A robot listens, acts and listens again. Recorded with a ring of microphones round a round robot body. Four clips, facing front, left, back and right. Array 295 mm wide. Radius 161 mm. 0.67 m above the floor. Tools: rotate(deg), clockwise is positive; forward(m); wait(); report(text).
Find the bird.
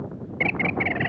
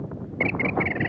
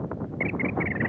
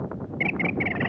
report("Facing the bird.")